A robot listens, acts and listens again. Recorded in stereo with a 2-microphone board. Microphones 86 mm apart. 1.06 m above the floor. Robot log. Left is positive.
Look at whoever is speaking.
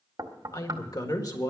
note: The woman speaking: about 50° left or 130° left.
cmd yaw +50
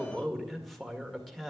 end: Facing the woman speaking.